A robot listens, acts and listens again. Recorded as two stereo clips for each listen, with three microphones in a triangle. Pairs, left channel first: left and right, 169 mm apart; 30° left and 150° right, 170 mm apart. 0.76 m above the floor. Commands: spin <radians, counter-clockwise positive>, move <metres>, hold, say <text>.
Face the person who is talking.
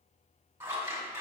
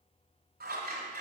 hold
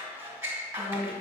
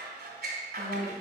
spin 0.44
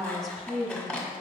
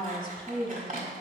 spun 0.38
say Found it: a woman speaking, straight ahead.